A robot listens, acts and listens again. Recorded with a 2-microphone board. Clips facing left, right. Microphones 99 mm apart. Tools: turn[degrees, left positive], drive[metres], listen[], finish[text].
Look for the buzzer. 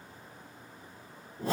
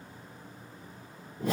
Action: listen[]
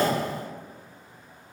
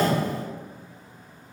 Action: listen[]
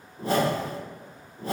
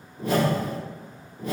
Action: finish[I can't make out a buzzer, only a whoosh.]